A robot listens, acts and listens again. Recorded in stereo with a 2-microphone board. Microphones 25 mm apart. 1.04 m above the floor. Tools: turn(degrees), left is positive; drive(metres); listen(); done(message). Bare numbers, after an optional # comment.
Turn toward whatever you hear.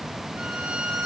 turn(-90)
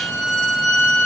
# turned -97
# So it is at 10° left.
turn(10)
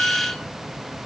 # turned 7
done("Facing the violin.")